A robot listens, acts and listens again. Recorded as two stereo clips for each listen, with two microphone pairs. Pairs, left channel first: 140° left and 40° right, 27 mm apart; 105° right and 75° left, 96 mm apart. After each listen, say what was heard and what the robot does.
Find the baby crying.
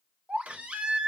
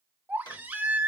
Facing the baby crying, under 1 m away.